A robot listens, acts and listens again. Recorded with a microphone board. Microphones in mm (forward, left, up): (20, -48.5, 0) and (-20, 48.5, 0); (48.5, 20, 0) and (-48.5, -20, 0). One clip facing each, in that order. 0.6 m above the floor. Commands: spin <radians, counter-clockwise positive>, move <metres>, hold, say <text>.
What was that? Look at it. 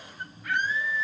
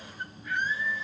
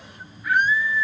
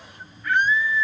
spin -1.05
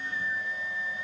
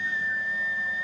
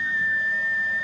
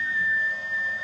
spin -0.17
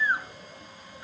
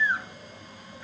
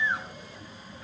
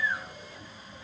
say Found it: a scream, straight ahead.